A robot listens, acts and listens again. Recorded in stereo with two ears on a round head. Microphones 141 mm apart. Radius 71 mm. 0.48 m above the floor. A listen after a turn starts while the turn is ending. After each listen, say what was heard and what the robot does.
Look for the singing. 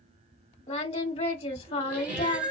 The singing: about 40° left or 140° left. Turn 40° left.
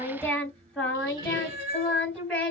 Found it: singing, straight ahead.